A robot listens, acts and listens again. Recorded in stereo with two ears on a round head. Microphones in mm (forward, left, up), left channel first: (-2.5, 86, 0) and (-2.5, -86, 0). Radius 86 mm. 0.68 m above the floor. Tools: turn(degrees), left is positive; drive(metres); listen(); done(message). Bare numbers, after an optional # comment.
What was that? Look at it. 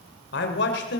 # The man speaking: about 60° left or 120° left.
turn(60)
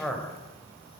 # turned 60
done("Facing the man speaking.")